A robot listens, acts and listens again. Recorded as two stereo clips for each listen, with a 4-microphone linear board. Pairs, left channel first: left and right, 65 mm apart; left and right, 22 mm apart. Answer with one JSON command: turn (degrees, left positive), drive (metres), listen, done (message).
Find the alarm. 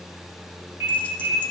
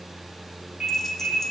{"turn": -45}
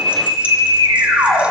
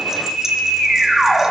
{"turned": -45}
{"turn": -90}
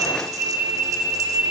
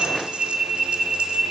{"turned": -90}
{"turn": -25}
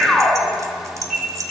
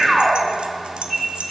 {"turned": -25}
{"done": "Found it: an alarm, straight ahead, 2 to 4 m away."}